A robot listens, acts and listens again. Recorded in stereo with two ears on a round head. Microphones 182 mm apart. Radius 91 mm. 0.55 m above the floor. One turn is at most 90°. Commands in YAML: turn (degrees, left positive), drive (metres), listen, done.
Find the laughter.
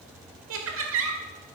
turn: -65
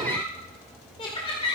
turn: 30
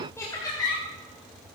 turn: 20
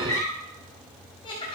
turn: 25
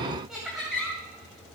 done: "Found it: laughter, straight ahead."